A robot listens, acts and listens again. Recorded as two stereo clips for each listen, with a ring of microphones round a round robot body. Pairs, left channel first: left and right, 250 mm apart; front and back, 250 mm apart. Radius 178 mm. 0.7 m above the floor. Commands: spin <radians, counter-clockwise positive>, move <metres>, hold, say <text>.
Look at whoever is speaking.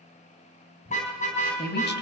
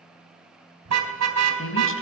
spin 0.70
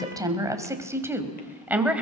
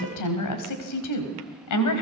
say Facing the woman speaking.